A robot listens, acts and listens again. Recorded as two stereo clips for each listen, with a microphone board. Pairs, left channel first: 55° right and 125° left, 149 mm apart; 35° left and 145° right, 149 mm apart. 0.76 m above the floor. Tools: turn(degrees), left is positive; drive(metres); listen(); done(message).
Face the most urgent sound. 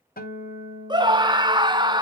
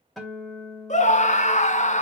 turn(degrees=65)
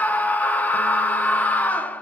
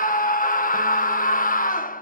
turn(degrees=20)
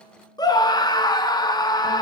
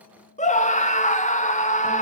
done("Found it: a scream, straight ahead.")